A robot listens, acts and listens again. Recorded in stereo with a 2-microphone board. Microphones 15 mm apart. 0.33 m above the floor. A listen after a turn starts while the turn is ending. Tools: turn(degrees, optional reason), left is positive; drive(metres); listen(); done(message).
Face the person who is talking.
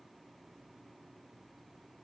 listen()
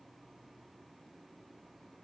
listen()
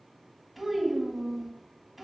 turn(degrees=-30)
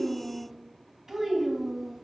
turn(degrees=-140, reason="So it is at 140° right.")
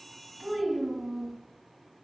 turn(degrees=-50, reason="The child speaking is now 50° right.")
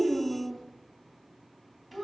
done("Found it: a child speaking, straight ahead, 1 to 2 m away.")